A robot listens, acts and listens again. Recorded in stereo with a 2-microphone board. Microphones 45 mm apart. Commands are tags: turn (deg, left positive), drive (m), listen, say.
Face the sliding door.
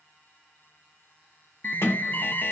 <turn deg="65"/>
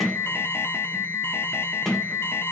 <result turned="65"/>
<say>Found it: a sliding door, straight ahead, 1 to 2 m away.</say>